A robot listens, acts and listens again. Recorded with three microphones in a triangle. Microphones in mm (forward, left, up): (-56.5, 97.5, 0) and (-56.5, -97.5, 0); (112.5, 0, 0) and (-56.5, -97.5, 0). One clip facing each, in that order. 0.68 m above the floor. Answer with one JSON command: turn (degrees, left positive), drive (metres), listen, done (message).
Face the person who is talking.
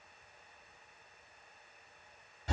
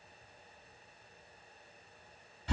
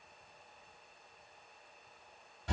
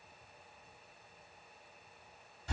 {"listen": true}
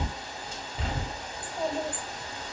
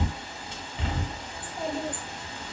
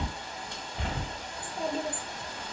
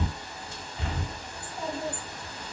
{"done": "Facing the child speaking."}